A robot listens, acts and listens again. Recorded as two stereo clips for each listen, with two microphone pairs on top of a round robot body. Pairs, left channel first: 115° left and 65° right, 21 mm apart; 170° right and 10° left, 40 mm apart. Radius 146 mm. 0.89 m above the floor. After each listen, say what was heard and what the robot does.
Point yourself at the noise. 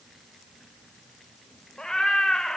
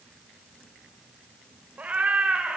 The cat meowing: 70° left. Turn 70° left.
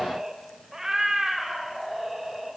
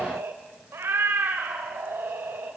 The cat meowing is now 30° left. Turn 30° left.
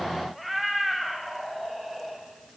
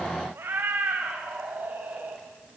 The cat meowing is now 40° left. Turn 40° left.
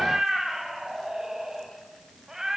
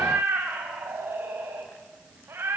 The cat meowing is now 10° left. Turn 10° left.
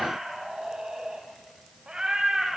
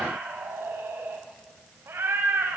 Facing the cat meowing, 2 to 4 m away.